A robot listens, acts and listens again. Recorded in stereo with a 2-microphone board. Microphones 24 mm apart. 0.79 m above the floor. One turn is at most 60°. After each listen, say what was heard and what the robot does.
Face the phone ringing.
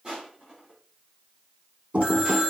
The phone ringing: about 40° left or 140° left. Turn 40° left.
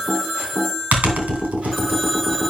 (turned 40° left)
Facing the phone ringing, 2 to 4 m away.